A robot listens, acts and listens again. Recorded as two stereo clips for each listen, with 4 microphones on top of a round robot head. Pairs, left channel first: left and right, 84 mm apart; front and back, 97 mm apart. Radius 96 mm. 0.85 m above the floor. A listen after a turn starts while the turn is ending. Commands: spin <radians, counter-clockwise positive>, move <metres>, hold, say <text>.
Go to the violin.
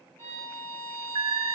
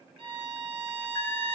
spin 2.71
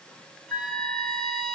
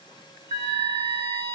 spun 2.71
move 1.0
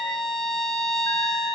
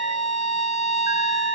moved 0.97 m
move 1.0
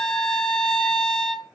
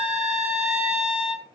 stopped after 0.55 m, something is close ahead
say I am next to the violin.